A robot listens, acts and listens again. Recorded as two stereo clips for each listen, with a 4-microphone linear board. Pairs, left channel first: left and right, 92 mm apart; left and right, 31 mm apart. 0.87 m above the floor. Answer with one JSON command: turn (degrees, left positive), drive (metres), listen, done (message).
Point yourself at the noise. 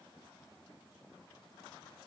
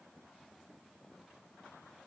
{"listen": true}
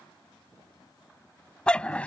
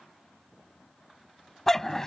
{"turn": 30}
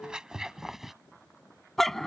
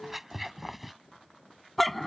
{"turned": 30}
{"turn": 30}
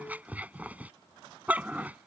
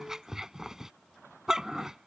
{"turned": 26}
{"turn": -15}
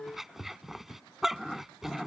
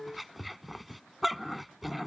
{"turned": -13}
{"done": "Facing the dog barking."}